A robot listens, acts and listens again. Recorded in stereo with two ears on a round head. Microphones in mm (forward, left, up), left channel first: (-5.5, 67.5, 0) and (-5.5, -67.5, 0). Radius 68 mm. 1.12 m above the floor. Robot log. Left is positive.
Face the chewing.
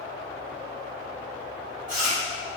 note: The chewing: about 55° right or 125° right.
cmd yaw -55
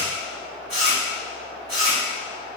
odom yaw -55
note: So it is at 65° right.
cmd yaw -65
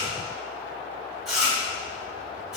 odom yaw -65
end: Found it: chewing, straight ahead.